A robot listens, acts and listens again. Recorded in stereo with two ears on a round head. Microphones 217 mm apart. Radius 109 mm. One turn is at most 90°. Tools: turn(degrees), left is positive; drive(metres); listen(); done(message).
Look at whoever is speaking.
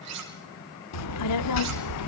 turn(degrees=70)
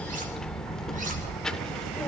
done("Found it: a child speaking, straight ahead, under 1 m away.")